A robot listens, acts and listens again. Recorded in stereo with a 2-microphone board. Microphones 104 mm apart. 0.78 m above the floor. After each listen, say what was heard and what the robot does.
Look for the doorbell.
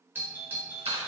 The doorbell: about 20° right or 160° right. Turn 20° right.
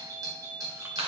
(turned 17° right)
So it is at 145° right. Turn 145° right.
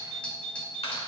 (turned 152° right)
The doorbell is now 15° left. Turn 15° left.
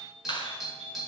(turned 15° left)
Facing the doorbell, 2 to 4 m away.